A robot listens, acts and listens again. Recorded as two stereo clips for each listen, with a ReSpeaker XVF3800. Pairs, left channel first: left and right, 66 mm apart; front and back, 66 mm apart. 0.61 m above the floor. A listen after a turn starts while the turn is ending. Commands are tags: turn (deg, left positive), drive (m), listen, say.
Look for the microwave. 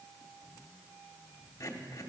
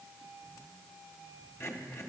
<listen/>
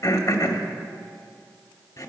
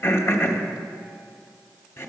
<listen/>
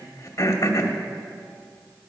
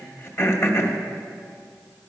<say>I can't make out a microwave to turn to.</say>